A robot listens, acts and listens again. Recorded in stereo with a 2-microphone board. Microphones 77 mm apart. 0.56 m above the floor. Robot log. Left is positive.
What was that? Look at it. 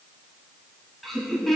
cmd yaw +30
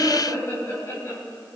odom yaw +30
note: So it is at 140° left.
cmd yaw +140
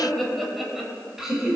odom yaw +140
note: The laughter is now 10° right.
cmd yaw -10
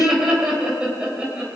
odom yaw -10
note: The laughter is now 15° right.
cmd yaw -15
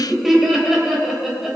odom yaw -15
end: Found it: laughter, straight ahead, 2 to 4 m away.